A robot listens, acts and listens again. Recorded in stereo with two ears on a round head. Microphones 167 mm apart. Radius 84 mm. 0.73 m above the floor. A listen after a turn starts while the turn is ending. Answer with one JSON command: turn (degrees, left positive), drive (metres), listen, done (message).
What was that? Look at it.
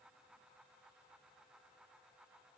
{"listen": true}
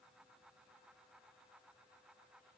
{"listen": true}
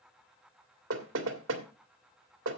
{"turn": -70}
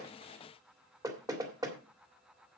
{"turn": -20}
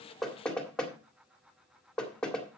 {"done": "Facing the knocking."}